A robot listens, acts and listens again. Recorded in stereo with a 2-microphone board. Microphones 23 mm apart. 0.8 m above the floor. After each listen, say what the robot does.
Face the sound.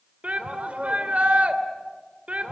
Turn 70° right.
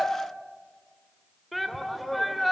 Found it: a shout, straight ahead.